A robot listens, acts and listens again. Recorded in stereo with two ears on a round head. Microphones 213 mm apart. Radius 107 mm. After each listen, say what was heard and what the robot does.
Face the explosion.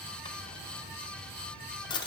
Keep listening.
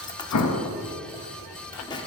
The explosion: about 65° left or 115° left. Turn 65° left.
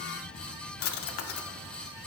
Keep listening.
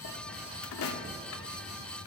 I heard an explosion, but can't make it out now. It was about straight ahead or 50° left.